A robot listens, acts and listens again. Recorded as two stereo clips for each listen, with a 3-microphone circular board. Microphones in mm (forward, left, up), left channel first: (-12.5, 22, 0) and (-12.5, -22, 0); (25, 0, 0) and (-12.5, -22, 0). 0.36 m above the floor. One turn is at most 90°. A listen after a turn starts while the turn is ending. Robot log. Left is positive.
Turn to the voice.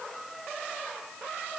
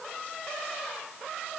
cmd idle
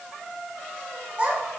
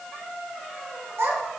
note: The child speaking: 150° right.
cmd yaw -90
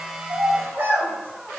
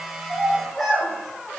note: The child speaking is now 55° right.
cmd yaw -55
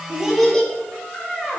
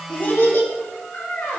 note: The child speaking is now 15° left.
cmd yaw +15
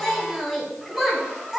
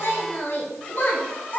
end: Facing the child speaking, 2 to 4 m away.